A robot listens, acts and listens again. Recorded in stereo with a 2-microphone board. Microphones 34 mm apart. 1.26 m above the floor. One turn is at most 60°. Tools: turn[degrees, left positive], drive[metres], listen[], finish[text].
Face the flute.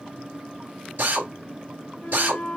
Thought: The flute: about 35° left or 145° left.
Action: turn[35]
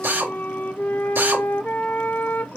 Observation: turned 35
Thought: So it is at 105° left.
Action: turn[60]
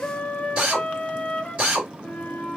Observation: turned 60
Thought: The flute is now 45° left.
Action: turn[45]
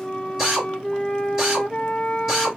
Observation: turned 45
Thought: The flute is now 25° left.
Action: turn[25]
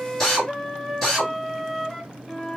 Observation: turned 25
Action: finish[Found it: a flute, straight ahead, under 1 m away.]